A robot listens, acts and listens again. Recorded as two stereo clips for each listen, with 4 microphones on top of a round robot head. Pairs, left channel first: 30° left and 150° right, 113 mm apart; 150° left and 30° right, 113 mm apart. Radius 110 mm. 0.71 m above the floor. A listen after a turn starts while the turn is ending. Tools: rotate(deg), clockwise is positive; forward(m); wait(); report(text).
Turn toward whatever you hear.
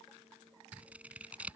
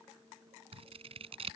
rotate(70)
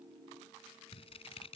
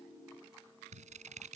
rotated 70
rotate(10)
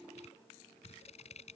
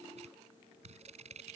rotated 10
report("Facing the scissors.")